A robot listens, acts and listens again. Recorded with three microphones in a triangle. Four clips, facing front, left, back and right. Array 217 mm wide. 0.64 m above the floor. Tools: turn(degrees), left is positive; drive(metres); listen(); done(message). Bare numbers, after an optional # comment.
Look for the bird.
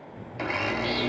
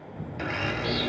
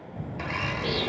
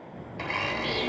# The bird: 175° left.
turn(175)
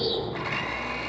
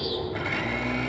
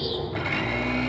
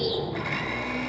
# The bird is now 50° right.
turn(-50)
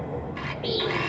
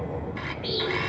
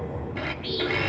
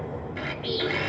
done("Found it: a bird, straight ahead.")